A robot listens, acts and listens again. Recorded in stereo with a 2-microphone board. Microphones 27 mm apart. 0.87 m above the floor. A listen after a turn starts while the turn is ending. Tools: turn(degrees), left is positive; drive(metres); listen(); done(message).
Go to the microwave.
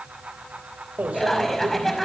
turn(degrees=-65)
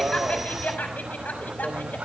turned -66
drive(metres=1.0)
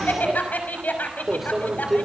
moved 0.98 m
drive(metres=1.0)
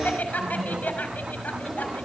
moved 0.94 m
drive(metres=1.0)
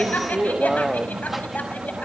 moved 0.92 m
drive(metres=1.0)
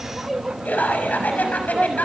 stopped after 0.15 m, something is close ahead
done("Arrived at the microwave, straight ahead.")